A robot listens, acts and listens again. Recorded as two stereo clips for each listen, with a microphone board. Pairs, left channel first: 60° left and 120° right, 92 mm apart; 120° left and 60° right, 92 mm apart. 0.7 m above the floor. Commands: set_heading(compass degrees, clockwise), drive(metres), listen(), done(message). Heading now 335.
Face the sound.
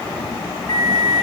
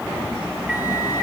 set_heading(320)
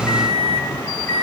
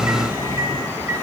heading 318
done("Found it: a microwave, straight ahead.")